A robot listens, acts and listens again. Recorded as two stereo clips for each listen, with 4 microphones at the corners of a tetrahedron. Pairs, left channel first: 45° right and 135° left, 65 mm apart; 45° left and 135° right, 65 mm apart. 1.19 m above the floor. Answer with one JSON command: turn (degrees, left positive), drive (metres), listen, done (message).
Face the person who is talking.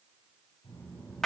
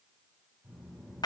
{"turn": -50}
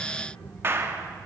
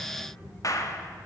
{"done": "Facing the child speaking."}